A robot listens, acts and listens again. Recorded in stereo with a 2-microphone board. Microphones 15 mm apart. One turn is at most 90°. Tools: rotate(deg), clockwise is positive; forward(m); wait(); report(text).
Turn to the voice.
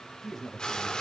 rotate(-30)
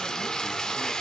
wait()
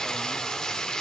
wait()
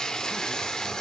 report("I heard a man speaking, but can't make it out now. It was about 30° right or 150° left.")